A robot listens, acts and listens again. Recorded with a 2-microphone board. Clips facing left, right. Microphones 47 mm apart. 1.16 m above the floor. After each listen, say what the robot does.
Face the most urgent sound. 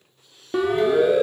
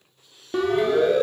Turn 30° left.
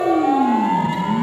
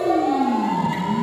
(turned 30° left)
Turn 140° left.
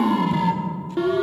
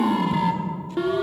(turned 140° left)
Facing the siren.